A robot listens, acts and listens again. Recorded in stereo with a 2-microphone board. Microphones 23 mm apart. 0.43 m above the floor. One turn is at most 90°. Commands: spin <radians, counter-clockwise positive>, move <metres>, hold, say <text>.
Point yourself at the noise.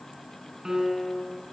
spin -0.35
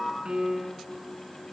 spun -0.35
spin -1.57
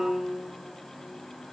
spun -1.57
spin -1.40
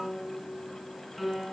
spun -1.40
say Facing the piano, 2 to 4 m away.